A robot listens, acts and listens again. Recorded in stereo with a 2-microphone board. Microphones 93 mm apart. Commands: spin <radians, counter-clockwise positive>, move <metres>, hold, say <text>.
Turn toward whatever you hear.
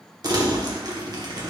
spin -0.79
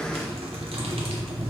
spin -1.57
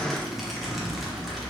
say Facing the crumpling, under 1 m away.